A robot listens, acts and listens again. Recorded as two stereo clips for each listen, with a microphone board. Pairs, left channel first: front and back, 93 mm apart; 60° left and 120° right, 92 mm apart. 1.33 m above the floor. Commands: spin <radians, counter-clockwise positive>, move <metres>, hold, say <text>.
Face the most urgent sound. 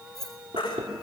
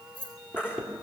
spin -0.17
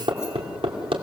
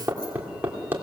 hold
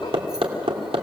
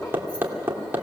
hold
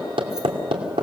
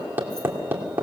say I heard a baby crying from this way, but can't make it out now.